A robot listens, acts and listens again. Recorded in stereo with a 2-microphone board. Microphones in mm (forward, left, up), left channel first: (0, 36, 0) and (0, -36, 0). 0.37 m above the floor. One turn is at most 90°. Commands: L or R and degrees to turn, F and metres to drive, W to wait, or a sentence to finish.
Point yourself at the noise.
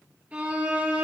R20
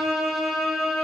Facing the violin, over 4 m away.